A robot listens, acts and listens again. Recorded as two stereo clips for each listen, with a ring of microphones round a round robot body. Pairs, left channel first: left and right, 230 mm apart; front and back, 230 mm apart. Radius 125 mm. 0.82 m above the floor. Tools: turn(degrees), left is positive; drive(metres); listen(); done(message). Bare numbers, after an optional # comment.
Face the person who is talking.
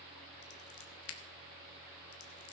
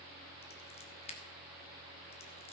listen()
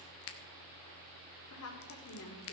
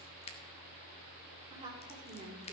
# The woman speaking: 105° left.
turn(105)
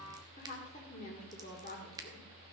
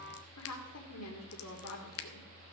# The woman speaking is now 25° left.
turn(25)
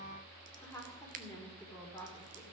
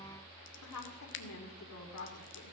# The woman speaking is now 10° left.
turn(10)
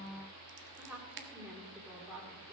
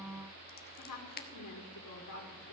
done("Found it: a woman speaking, straight ahead.")